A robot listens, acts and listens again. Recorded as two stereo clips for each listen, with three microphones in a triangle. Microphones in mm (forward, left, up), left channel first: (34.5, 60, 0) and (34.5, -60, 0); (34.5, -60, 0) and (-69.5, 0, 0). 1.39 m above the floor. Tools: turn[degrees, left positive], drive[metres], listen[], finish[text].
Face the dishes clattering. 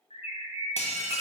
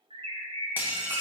Thought: The dishes clattering: 80° left.
Action: turn[80]
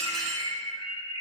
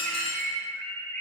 Action: finish[Found it: dishes clattering, straight ahead, under 1 m away.]